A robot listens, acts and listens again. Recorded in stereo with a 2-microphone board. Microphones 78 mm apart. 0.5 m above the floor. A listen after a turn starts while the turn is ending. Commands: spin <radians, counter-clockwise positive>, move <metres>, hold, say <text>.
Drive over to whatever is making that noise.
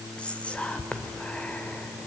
spin 0.52
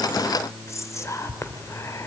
spin 2.27
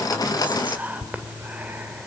spin -0.44
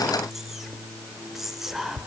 move 1.0
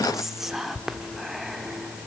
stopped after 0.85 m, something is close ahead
say Arrived at the whispering, straight ahead.